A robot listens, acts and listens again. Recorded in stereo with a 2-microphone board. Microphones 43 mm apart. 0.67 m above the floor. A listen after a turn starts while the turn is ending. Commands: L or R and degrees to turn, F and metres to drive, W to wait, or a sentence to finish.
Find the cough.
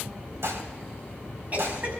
R40
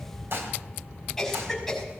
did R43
Facing the cough.